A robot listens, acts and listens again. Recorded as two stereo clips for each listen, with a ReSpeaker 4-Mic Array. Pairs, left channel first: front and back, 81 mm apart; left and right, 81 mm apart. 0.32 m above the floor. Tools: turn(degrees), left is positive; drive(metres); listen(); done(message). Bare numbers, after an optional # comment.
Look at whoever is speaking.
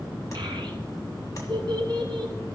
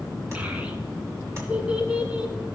# The child speaking: 165° right.
turn(-165)
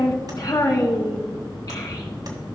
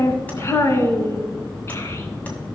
# The child speaking is now 35° left.
turn(35)
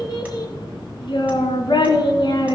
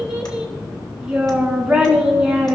# The child speaking is now 10° right.
turn(-10)
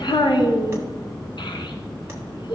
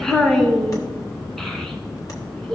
done("Found it: a child speaking, straight ahead, 1 to 2 m away.")